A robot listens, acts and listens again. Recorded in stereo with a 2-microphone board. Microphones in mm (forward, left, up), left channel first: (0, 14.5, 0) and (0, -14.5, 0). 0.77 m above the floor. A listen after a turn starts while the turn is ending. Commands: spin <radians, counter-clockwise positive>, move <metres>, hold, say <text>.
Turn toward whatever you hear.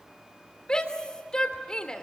spin 0.44
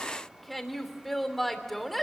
say Facing the shout, 2 to 4 m away.